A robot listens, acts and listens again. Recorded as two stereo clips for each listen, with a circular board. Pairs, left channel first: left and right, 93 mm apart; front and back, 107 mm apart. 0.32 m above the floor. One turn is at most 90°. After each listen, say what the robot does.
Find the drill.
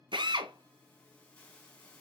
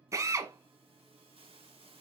Turn 90° right.
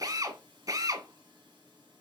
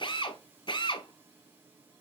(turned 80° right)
Turn 40° right.
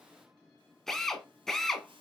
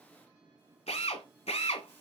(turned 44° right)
Facing the drill.